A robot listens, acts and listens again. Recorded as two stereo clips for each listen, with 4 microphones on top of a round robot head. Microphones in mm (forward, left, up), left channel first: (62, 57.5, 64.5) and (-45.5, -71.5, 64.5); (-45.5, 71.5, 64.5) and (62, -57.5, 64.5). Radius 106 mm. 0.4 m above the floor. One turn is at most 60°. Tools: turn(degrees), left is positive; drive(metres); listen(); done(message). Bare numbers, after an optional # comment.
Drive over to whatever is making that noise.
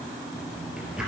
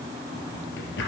# The drawer: 145° left.
turn(60)
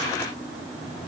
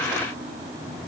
# Nothing new. It was at 85° left.
turn(60)
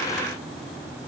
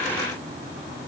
# Nothing new. It was at 25° left.
turn(25)
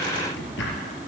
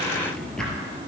# The drawer is now 45° left.
turn(45)
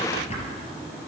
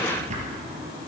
drive(1.0)
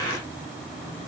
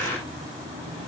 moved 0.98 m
listen()
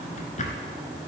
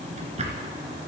drive(1.0)
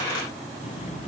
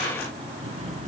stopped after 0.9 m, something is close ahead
done("I am next to the drawer.")